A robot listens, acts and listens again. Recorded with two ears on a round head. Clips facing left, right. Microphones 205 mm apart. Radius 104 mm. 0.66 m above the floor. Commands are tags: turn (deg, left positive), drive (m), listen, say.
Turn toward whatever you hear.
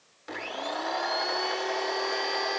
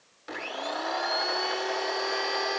<turn deg="-30"/>
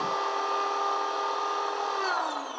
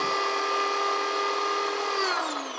<turn deg="-145"/>
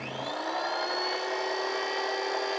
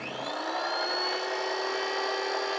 <say>Found it: a blender, straight ahead.</say>